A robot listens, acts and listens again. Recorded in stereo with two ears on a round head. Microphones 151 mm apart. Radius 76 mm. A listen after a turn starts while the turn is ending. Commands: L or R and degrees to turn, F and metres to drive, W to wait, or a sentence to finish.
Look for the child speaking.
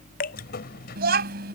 R65
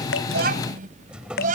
R45
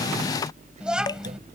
Found it: a child speaking, straight ahead.